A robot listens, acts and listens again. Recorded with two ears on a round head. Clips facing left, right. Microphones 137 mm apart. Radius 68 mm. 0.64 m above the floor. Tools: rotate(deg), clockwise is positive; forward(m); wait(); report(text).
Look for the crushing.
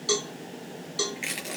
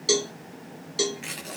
rotate(-30)
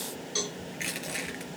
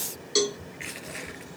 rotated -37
rotate(-130)
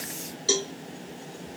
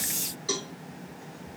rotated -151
rotate(25)
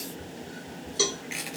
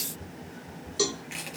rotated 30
report("Found it: crushing, straight ahead, over 4 m away.")